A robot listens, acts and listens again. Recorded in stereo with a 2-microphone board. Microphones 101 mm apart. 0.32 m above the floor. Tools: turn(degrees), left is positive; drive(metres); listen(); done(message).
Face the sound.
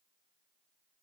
listen()
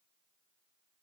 listen()
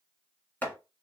turn(degrees=15)
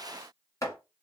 turn(degrees=150)
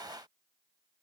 listen()
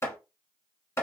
turn(degrees=30)
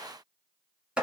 turn(degrees=-10)
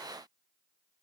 listen()
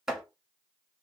done("Found it: chopping, straight ahead.")